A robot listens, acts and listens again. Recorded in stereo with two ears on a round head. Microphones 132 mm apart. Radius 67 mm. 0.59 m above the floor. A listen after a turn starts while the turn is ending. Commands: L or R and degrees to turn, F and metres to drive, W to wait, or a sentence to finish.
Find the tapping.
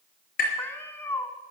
L65
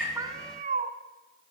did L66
W
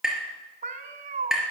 Facing the tapping.